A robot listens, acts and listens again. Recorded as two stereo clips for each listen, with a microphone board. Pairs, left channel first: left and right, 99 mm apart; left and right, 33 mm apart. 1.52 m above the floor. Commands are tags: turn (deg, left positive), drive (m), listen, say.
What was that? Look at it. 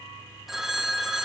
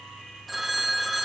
<turn deg="30"/>
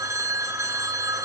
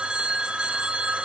<turn deg="-30"/>
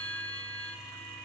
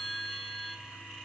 <turn deg="15"/>
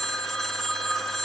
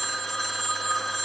<say>Facing the phone ringing, 1 to 2 m away.</say>